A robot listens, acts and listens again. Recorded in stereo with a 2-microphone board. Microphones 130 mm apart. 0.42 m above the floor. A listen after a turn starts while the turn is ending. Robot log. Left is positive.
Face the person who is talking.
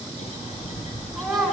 cmd yaw +30
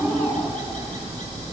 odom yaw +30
cmd idle
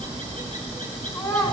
note: So it is at 150° left.
cmd yaw +150
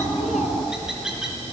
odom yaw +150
cmd idle
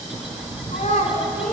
note: The child speaking is now 65° left.
cmd yaw +65
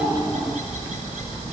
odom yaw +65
cmd idle
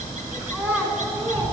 note: The child speaking is now 10° right.
cmd yaw -10
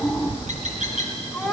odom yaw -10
end: Found it: a child speaking, straight ahead, 2 to 4 m away.